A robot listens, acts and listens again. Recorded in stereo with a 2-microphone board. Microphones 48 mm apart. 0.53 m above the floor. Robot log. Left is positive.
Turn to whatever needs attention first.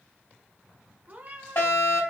note: The fire alarm: about 65° left or 115° left.
cmd yaw +65
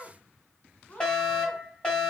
note: So it is at 20° left.
cmd yaw +20
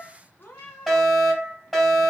end: Found it: a fire alarm, straight ahead.